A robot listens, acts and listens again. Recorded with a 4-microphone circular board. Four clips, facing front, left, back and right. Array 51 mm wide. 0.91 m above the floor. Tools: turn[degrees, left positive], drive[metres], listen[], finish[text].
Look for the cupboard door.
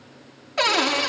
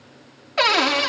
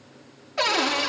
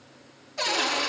Thought: The cupboard door: 75° left.
Action: turn[75]
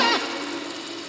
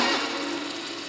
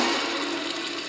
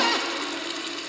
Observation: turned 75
Thought: The cupboard door is now 10° right.
Action: turn[-10]
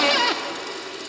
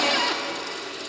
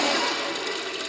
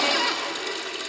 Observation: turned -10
Action: finish[Found it: a cupboard door, straight ahead, under 1 m away.]